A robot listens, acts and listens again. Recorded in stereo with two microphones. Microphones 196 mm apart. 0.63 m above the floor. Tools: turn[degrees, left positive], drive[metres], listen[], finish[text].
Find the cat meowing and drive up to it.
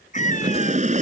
Thought: The cat meowing: about 40° left or 140° left.
Action: turn[40]
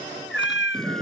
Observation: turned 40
Thought: So it is at 100° left.
Action: turn[100]
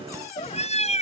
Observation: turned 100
Thought: The cat meowing is now 35° left.
Action: turn[35]
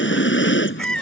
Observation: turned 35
Action: drive[1.0]
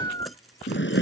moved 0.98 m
Thought: The cat meowing is now 20° left.
Action: turn[20]
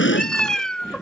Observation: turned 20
Action: drive[1.0]
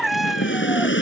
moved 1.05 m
Action: drive[1.0]
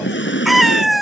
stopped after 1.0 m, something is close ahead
Action: finish[Arrived at the cat meowing, straight ahead.]